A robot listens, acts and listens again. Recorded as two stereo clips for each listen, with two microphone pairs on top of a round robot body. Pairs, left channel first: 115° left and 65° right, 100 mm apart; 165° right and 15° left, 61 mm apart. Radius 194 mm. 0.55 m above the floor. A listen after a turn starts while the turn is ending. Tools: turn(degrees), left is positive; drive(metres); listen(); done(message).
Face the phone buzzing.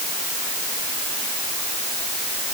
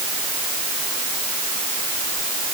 listen()
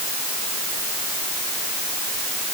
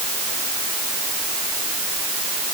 listen()
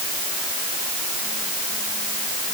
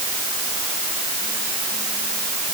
done("I can't make out a phone buzzing.")